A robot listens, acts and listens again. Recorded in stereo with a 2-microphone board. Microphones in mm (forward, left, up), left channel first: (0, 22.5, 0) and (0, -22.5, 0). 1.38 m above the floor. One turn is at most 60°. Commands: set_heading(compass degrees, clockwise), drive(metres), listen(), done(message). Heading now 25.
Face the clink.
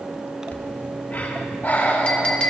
set_heading(5)
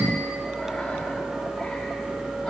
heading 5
listen()
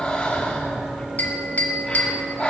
set_heading(305)
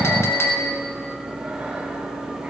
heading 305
set_heading(245)
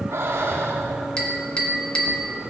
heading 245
set_heading(225)
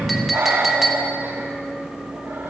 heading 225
done("Facing the clink, 1 to 2 m away.")